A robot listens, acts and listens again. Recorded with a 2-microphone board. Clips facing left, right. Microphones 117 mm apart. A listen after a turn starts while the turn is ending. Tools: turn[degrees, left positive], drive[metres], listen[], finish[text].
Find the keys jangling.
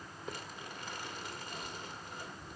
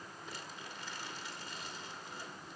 Action: listen[]
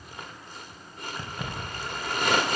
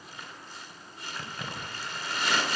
Action: turn[30]
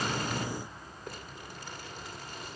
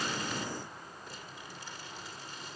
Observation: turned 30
Action: listen[]
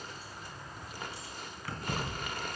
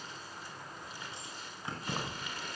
Thought: So it is at 20° right.
Action: turn[-20]
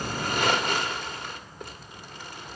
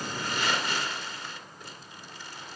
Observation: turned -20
Action: listen[]
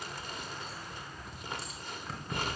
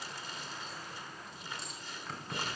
Action: finish[Found it: keys jangling, straight ahead.]